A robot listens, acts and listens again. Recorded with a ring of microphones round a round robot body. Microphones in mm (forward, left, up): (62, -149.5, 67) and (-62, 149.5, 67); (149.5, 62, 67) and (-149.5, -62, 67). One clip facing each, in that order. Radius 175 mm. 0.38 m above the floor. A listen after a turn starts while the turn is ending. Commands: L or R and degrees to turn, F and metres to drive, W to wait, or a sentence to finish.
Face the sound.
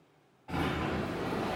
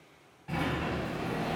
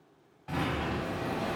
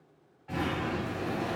L55
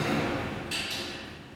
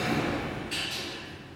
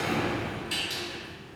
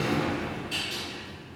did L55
Found it: a sliding door, straight ahead.